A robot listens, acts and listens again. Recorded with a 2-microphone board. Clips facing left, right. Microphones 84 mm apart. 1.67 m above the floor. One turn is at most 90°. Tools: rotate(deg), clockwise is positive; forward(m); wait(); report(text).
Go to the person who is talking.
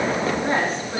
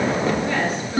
rotate(-35)
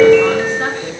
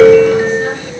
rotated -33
wait()
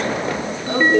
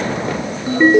wait()
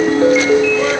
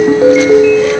report("I heard a woman speaking, but can't make it out now. It was about 5° left or 110° left. I did not reach it.")